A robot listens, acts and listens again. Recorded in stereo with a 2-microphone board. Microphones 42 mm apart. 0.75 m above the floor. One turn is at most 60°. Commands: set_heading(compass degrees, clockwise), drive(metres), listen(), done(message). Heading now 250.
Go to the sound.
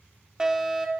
set_heading(280)
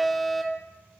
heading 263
drive(1.0)
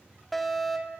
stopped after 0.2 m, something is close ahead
done("Blocked. The fire alarm is further on, straight ahead.")